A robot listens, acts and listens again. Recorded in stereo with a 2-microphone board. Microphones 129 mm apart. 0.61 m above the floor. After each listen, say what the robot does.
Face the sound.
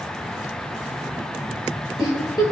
Turn 35° left.
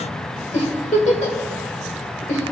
Turn 110° left.
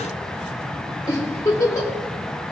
Turn 30° left.
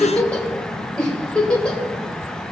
Turn 10° left.
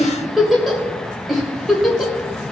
Found it: a giggle, straight ahead.